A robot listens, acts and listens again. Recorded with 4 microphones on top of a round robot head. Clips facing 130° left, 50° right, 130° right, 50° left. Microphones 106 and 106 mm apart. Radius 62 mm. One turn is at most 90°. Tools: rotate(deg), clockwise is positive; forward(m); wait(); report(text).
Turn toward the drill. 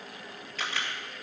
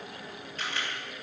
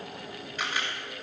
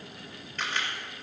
wait()
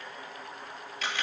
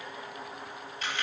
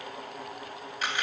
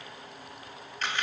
wait()
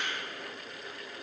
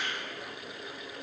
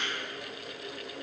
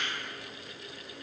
report("I can't make out a drill to turn to.")